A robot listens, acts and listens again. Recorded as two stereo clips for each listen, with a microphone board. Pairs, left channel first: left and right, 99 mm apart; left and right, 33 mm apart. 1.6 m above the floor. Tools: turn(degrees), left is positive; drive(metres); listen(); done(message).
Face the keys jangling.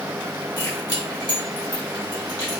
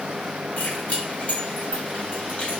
turn(degrees=40)
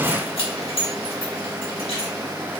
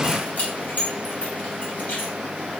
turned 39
turn(degrees=95)
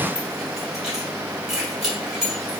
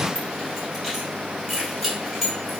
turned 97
done("Facing the keys jangling, 1 to 2 m away.")